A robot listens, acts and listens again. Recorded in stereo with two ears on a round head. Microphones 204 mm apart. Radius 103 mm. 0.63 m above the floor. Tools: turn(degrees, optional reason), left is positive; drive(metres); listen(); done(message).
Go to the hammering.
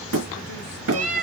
turn(degrees=-70, reason="The hammering: about 70° right or 110° right.")
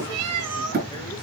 turn(degrees=-40, reason="So it is at 40° right.")
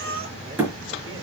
turn(degrees=-10, reason="The hammering is now 10° right.")
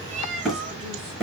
drive(metres=1.0)
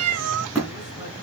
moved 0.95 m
drive(metres=1.0)
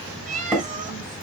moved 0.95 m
drive(metres=1.0)
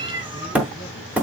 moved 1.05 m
drive(metres=1.0)
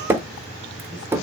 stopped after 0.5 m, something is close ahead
turn(degrees=-10, reason="The hammering is now 10° right.")
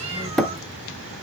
done("I am next to the hammering.")